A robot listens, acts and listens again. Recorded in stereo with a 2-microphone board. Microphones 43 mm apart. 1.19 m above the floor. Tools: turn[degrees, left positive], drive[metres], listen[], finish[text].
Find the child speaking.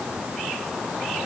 Action: listen[]
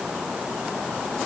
Action: listen[]
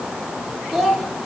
Action: turn[30]
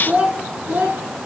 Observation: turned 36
Thought: So it is at 45° right.
Action: turn[-45]
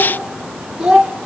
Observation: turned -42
Thought: The child speaking is now 15° right.
Action: turn[-15]
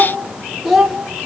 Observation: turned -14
Thought: The child speaking is now 10° right.
Action: turn[-10]
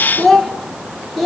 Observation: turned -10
Action: finish[Found it: a child speaking, straight ahead.]